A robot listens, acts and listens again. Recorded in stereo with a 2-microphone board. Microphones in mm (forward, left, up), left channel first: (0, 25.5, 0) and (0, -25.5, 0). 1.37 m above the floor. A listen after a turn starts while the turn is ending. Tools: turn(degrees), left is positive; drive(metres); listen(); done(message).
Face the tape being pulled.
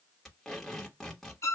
turn(degrees=30)
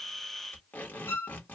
turn(degrees=140)
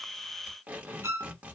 turn(degrees=-30)
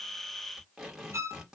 done("Found it: tape being pulled, straight ahead, 1 to 2 m away.")